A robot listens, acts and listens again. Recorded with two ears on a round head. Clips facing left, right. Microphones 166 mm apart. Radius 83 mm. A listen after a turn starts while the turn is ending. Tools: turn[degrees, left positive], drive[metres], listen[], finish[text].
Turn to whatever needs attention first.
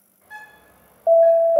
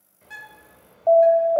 Thought: The alarm: about 30° left or 150° left.
Action: turn[30]
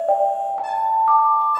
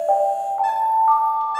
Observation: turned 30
Thought: So it is at 120° left.
Action: turn[120]
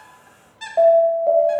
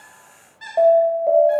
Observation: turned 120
Action: finish[Facing the alarm, 1 to 2 m away.]